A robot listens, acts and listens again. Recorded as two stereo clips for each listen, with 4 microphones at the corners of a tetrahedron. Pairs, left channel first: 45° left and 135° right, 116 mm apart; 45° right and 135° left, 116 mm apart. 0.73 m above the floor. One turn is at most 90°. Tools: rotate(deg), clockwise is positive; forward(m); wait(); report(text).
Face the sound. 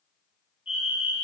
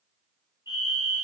rotate(-70)
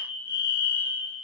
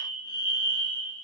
report("Found it: a fire alarm, straight ahead.")